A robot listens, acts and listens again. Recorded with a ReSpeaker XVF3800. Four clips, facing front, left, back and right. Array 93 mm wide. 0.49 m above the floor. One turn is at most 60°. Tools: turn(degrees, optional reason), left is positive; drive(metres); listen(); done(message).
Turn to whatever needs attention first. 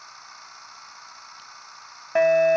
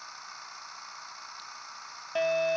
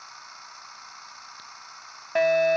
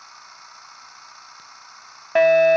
turn(degrees=-60, reason="The fire alarm: 70° right.")
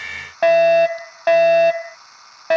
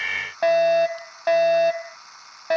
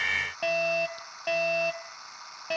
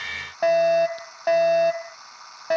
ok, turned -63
done("Found it: a fire alarm, straight ahead.")